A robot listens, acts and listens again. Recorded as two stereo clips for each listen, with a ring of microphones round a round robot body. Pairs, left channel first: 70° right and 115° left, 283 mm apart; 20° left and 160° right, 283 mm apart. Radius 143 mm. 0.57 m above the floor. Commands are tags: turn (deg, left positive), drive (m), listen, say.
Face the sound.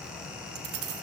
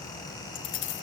<turn deg="70"/>
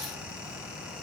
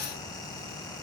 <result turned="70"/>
<listen/>
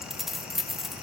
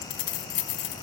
<turn deg="25"/>
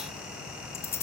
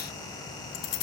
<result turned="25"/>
<turn deg="15"/>
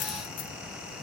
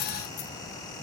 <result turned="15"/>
<listen/>
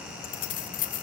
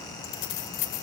<say>Facing the keys jangling.</say>